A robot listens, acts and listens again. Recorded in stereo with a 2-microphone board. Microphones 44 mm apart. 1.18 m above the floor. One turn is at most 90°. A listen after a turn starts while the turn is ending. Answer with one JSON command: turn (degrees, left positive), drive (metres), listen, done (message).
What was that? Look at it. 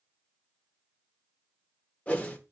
{"turn": 30}
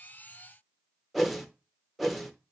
{"done": "Facing the whoosh."}